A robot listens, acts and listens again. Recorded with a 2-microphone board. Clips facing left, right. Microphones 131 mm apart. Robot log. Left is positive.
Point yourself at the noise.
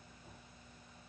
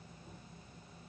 cmd idle
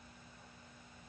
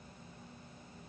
cmd idle
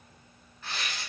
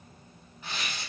note: The tearing paper: about 15° right or 165° right.
cmd yaw -15
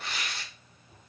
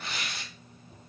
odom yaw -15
end: Facing the tearing paper.